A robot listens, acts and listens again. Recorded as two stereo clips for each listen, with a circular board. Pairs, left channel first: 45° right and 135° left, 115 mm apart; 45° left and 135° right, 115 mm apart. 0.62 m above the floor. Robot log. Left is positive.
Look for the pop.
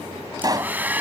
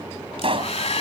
note: The pop: 170° right.
cmd yaw -170
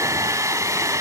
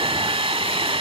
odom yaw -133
note: Nothing new. It was at 35° right.
cmd yaw -35
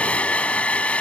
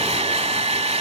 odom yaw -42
end: Facing where the pop came from. I can't hear it now.